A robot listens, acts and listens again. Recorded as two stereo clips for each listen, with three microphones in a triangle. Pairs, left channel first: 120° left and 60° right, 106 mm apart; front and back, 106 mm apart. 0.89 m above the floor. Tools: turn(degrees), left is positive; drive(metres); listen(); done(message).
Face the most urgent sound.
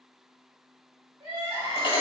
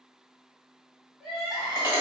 turn(degrees=-95)
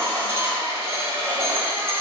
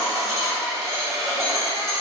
listen()
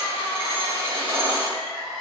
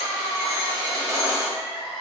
turn(degrees=30)
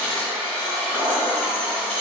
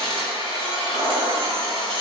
listen()
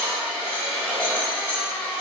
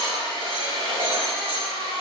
listen()
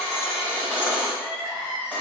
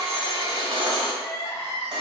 turn(degrees=-15)
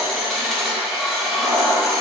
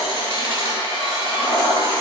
listen()
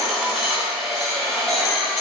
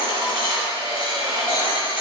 listen()
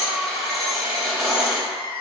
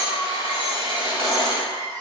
done("Found it: crying, straight ahead.")